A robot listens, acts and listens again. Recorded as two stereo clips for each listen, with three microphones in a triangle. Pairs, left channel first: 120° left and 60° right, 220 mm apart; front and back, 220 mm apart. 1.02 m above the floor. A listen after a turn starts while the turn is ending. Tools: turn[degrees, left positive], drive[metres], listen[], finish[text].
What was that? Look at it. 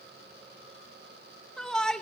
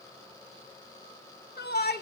Thought: The shout: 35° left.
Action: turn[35]
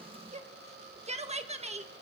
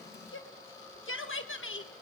Action: finish[Facing the shout, 1 to 2 m away.]